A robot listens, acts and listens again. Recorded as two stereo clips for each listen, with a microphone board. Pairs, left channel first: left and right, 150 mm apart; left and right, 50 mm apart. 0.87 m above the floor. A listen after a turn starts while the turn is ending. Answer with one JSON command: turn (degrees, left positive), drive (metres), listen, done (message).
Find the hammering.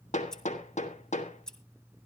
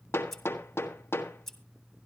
{"turn": 50}
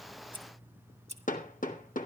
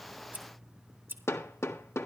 {"turn": 70}
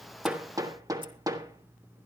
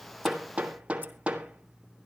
{"turn": -25}
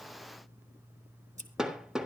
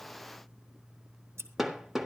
{"done": "Facing the hammering."}